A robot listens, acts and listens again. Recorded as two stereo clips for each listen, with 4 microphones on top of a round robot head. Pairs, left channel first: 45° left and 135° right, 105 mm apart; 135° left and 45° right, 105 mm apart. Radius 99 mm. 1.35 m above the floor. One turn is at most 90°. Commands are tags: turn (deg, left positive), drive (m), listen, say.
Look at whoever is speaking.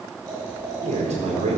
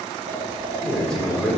<turn deg="-90"/>
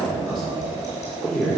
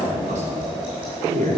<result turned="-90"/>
<turn deg="-40"/>
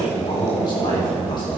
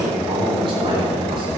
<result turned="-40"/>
<say>Found it: a man speaking, straight ahead, 2 to 4 m away.</say>